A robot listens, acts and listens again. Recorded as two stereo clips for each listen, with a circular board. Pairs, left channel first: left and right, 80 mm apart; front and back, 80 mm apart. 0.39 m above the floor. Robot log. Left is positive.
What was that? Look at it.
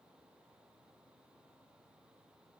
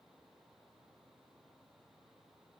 cmd idle
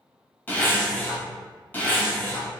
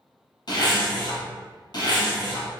note: The zipper: 25° left.
cmd yaw +25
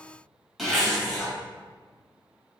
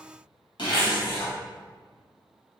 end: Facing the zipper, 1 to 2 m away.